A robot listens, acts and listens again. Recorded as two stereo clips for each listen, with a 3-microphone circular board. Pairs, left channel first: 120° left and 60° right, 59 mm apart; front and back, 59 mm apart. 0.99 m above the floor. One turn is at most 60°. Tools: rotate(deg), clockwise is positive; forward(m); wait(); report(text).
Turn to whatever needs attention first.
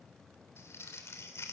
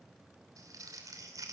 wait()
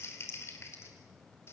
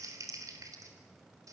wait()
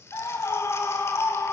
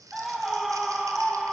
rotate(-60)
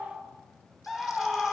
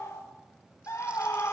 rotate(-35)
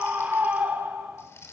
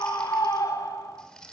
report("Found it: a scream, straight ahead.")